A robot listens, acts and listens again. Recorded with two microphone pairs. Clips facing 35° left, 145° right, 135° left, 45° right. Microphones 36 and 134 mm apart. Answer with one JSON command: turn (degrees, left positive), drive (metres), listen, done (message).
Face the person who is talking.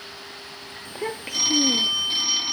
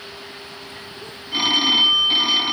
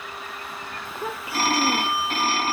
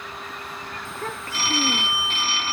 {"turn": 55}
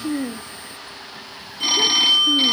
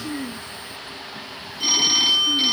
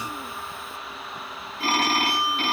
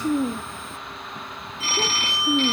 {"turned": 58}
{"done": "Facing the child speaking."}